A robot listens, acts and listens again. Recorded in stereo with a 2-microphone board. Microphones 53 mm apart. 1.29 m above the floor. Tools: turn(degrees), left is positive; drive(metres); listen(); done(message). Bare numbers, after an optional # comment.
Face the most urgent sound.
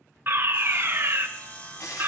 # The fire alarm: about 35° right or 145° right.
turn(-35)
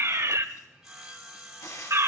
# So it is at 100° right.
turn(-100)
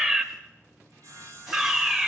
# The fire alarm is now 25° right.
turn(-25)
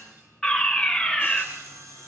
# The fire alarm is now 10° left.
turn(10)
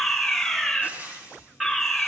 done("Facing the fire alarm, 1 to 2 m away.")